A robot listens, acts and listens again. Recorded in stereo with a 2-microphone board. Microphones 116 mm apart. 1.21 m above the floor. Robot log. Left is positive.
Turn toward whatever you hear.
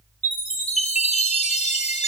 cmd yaw +90
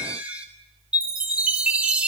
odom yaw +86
note: So it is at 10° right.
cmd yaw -10
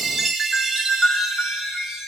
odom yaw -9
end: Found it: a chime, straight ahead, 2 to 4 m away.